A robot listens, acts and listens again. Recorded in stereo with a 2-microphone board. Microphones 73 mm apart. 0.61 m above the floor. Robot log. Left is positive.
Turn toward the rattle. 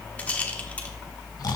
note: The rattle: about 20° left or 160° left.
cmd yaw +20
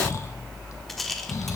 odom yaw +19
end: Found it: a rattle, straight ahead, 1 to 2 m away.